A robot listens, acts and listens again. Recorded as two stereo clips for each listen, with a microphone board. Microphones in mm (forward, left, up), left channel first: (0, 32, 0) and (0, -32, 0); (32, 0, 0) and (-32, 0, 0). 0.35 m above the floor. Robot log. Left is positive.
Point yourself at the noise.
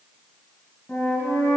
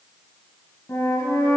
note: The flute: 25° left.
cmd yaw +25
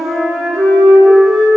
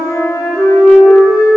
end: Facing the flute, 1 to 2 m away.